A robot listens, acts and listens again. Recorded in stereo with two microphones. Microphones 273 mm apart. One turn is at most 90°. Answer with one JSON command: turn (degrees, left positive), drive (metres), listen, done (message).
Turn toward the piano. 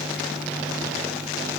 {"listen": true}
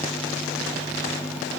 {"listen": true}
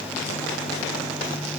{"done": "I can't make out a piano to turn to."}